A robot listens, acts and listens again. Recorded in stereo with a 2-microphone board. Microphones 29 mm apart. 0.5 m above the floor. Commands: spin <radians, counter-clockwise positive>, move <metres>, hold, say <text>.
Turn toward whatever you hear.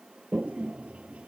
spin -1.05
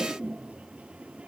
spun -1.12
spin -0.96
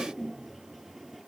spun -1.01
say Found it: a toilet flushing, straight ahead.